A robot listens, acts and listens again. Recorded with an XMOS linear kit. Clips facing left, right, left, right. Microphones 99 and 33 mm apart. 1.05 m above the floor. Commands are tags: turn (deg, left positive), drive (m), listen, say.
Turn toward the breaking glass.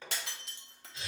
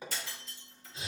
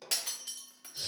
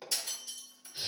<turn deg="70"/>
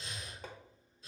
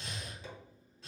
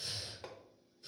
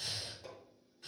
<listen/>
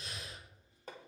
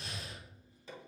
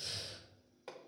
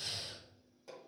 <say>I heard breaking glass, but can't make it out now. It was about straight ahead or 40° left.</say>